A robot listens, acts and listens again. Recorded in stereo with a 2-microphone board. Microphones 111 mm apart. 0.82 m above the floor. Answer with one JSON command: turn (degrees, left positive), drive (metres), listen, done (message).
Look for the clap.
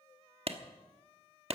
{"turn": -60}
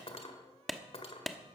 {"done": "Found it: a clap, straight ahead."}